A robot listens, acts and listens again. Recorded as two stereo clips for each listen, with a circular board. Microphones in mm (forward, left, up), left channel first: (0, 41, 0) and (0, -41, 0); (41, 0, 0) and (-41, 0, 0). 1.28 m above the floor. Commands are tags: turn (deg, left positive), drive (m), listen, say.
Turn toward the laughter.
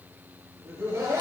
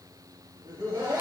<turn deg="-140"/>
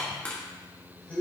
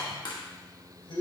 <turn deg="20"/>
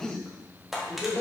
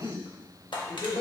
<turn deg="25"/>
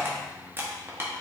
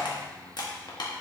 <listen/>
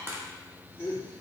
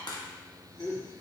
<turn deg="30"/>
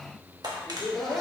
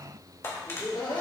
<say>Found it: laughter, straight ahead.</say>